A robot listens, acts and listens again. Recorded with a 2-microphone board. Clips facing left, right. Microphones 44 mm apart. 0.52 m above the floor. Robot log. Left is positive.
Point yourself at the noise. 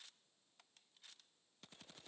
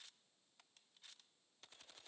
cmd idle
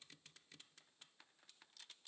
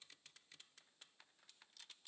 cmd idle
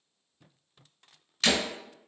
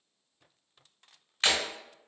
note: The breaking glass: about 30° right or 150° right.
cmd yaw -30
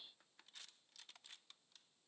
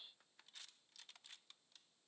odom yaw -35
cmd idle
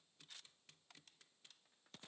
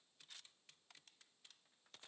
end: I heard breaking glass, but can't make it out now. It was about 5° left or 115° right.